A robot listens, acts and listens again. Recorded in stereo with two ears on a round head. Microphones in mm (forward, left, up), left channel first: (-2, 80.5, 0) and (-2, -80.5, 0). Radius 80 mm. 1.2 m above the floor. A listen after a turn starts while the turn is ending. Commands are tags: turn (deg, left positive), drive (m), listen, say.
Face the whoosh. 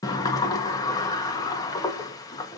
<listen/>
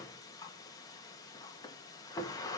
<listen/>
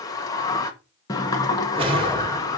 <turn deg="-30"/>
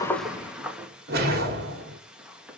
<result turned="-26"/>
<turn deg="-125"/>
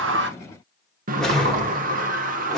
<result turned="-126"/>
<say>Facing the whoosh, 2 to 4 m away.</say>